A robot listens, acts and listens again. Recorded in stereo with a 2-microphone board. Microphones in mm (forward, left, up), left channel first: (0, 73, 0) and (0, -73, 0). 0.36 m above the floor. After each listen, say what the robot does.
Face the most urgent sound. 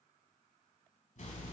Keep listening.
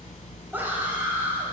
Turn 30° right.
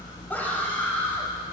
Turn 15° left.
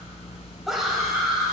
Found it: a scream, straight ahead.